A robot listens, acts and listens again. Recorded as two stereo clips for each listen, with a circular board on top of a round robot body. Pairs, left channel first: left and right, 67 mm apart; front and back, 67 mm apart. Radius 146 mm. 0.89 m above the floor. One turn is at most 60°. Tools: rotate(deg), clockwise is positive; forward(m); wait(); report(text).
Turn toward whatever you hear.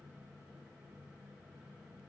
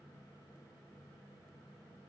wait()
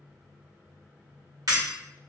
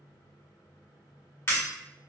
rotate(55)
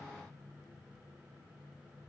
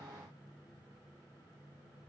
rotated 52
report("I heard breaking glass from this way, but can't make it out now.")